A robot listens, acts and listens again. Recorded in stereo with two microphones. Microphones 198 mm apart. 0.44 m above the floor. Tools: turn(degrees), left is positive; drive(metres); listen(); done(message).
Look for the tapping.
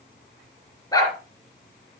listen()
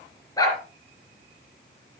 listen()
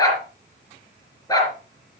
done("I can't make out tapping, only a dog barking.")